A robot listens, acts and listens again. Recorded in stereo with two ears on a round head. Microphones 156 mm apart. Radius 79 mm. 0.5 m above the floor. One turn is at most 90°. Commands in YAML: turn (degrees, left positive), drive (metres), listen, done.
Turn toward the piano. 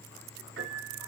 turn: -90
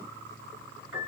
turn: -10
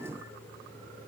listen: true
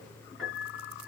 done: "Found it: a piano, straight ahead, over 4 m away."